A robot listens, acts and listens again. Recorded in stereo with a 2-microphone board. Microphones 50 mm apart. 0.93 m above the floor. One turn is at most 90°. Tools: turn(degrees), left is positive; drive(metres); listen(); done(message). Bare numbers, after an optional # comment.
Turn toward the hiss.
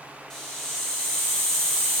turn(30)
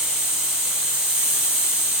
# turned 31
# So it is at 20° right.
turn(-20)
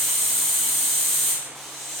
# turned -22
done("Found it: a hiss, straight ahead.")